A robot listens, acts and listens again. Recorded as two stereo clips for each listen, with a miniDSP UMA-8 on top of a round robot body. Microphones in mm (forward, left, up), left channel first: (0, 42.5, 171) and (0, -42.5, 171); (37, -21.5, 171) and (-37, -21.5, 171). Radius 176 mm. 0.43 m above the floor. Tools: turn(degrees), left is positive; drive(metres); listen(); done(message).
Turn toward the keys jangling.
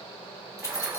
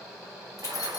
turn(degrees=35)
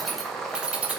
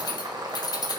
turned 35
turn(degrees=-20)
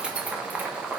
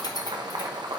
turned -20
listen()
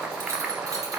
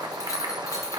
listen()
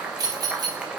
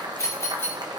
turn(degrees=-55)
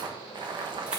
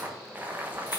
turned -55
listen()
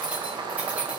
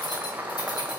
turn(degrees=-15)
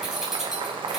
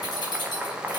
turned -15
done("Found it: keys jangling, straight ahead.")